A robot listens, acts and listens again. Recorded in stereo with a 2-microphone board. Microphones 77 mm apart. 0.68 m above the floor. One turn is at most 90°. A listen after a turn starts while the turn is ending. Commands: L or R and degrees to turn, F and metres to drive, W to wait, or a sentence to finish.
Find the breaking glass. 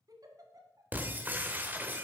R25
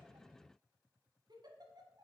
W
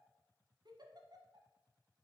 I heard breaking glass, but can't make it out now. It was about straight ahead or 130° right.